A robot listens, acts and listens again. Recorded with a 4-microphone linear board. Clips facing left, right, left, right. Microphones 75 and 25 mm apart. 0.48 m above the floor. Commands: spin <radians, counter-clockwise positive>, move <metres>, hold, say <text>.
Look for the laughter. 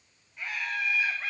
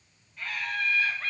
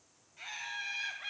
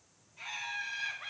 spin 0.52
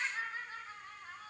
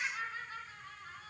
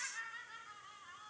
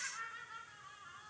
spin 2.44
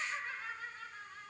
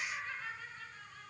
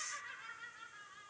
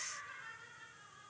spin 0.35
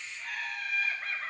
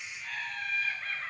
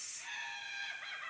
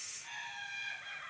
say Facing the laughter.